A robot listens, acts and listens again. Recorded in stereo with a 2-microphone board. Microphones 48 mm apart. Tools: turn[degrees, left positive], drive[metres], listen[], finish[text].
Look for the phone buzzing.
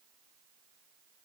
Action: listen[]
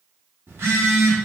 Thought: The phone buzzing: about 70° right or 110° right.
Action: turn[-70]
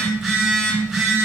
Thought: So it is at 10° right.
Action: turn[-10]
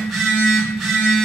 Action: finish[Facing the phone buzzing, 1 to 2 m away.]